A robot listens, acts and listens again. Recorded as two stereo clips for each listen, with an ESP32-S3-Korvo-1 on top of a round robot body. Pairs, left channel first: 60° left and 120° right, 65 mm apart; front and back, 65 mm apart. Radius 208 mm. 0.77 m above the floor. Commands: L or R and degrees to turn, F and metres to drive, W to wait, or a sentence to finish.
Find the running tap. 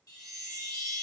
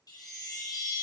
W
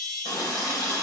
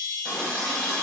L85
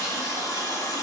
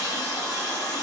L20
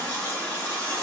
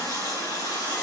Facing the running tap, 2 to 4 m away.